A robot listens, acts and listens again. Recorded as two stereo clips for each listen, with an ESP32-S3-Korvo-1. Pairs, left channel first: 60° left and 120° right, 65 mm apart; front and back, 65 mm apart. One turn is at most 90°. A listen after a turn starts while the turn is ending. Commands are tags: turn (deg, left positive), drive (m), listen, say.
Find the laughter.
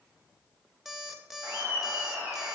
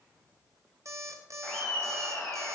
<turn deg="-70"/>
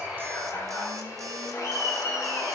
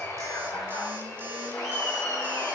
<turn deg="20"/>
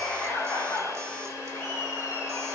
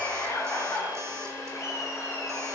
<turn deg="10"/>
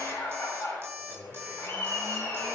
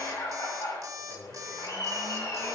<say>Facing the laughter.</say>